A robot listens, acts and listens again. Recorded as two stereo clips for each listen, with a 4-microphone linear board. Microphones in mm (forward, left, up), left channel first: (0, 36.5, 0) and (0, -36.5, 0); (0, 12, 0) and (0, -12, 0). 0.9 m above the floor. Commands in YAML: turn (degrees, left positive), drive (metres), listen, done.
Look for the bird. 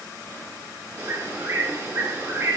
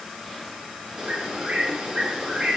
turn: -35
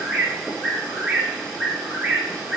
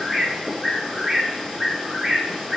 turn: -10
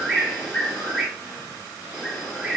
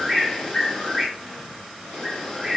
done: "Facing the bird."